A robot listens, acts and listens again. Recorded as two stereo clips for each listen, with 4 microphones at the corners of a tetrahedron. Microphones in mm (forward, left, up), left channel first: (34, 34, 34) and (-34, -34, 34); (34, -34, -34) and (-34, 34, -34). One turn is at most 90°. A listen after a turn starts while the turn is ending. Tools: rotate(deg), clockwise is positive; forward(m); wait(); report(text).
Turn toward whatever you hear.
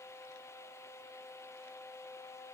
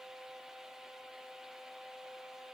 wait()
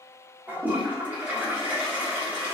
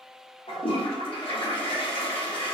rotate(65)
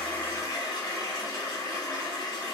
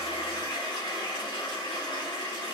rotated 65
report("Found it: a toilet flushing, straight ahead, 1 to 2 m away.")